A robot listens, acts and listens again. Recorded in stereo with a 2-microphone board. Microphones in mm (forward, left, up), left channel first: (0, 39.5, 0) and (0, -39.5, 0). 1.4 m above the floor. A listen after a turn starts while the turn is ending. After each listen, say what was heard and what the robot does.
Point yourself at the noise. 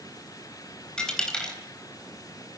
Turn 30° left.
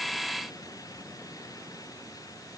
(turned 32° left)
Keep listening.
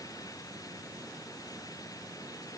I heard a dropped coin, but can't make it out now. It was about 20° right or 135° left.